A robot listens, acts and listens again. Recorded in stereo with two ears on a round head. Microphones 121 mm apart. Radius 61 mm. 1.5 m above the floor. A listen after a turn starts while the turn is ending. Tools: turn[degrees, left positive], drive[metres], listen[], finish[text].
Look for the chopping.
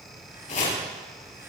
Thought: The chopping: about 50° left or 130° left.
Action: turn[50]
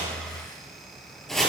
Action: finish[Facing the chopping.]